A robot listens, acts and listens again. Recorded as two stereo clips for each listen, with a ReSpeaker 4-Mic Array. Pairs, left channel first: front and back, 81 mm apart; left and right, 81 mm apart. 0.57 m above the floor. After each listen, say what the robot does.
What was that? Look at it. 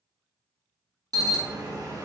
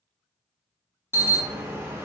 Turn 145° right.
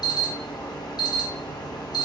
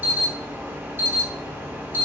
Turn 25° right.
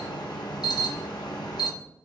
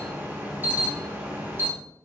Turn 25° right.
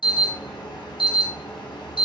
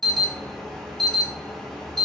Found it: an alarm, straight ahead, under 1 m away.